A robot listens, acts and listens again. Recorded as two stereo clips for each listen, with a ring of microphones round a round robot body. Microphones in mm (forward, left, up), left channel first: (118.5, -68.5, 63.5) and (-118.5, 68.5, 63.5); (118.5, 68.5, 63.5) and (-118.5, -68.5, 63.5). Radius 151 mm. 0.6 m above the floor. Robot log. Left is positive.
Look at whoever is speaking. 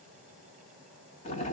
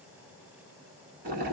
cmd idle
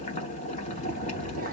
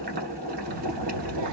note: The child speaking: 155° right.
cmd yaw -155
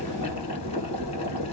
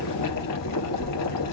note: The child speaking is now 25° right.
cmd yaw -25
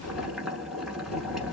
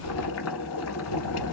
end: Found it: a child speaking, straight ahead.